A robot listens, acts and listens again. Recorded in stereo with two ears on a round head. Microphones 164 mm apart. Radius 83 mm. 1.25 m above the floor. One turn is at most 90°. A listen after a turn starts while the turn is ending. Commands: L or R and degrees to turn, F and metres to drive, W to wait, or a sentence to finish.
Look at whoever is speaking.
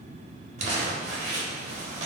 W
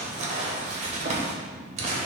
W
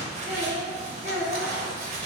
R15
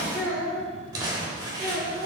R15
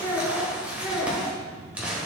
L30
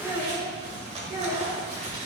R30
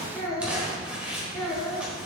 Found it: a child speaking, straight ahead, 2 to 4 m away.